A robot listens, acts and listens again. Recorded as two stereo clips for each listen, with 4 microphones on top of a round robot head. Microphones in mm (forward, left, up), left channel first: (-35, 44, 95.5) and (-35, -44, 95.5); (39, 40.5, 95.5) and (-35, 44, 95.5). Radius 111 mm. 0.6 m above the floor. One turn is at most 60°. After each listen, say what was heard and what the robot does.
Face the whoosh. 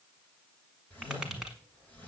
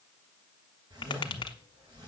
The whoosh: 160° left. Turn 60° left.
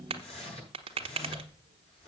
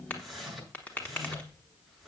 The whoosh is now 85° left. Turn 60° left.
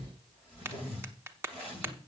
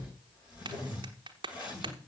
The whoosh is now 15° left. Turn 15° left.
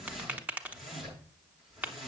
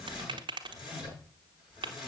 Found it: a whoosh, straight ahead, over 4 m away.